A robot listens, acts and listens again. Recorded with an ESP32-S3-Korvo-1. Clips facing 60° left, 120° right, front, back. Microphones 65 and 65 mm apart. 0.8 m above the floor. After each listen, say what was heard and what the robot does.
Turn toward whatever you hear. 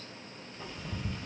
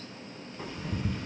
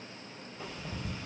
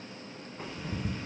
The ticking: 140° right. Turn 140° right.
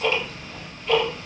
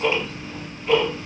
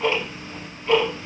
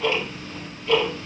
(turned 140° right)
The ticking is now 55° right. Turn 55° right.
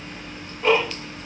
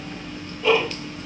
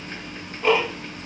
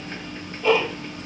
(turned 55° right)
The ticking is now 25° left. Turn 25° left.
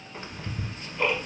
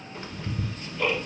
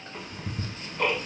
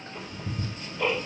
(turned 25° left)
Facing the ticking.